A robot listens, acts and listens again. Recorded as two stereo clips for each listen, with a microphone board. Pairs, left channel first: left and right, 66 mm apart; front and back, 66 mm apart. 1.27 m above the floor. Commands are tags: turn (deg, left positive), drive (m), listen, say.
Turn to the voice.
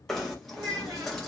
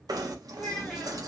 <turn deg="-85"/>
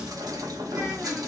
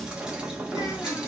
<listen/>
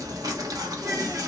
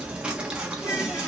<listen/>
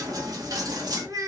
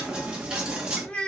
<turn deg="-75"/>
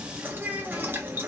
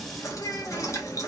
<turn deg="-25"/>
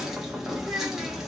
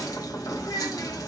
<say>Found it: a child speaking, straight ahead, 1 to 2 m away.</say>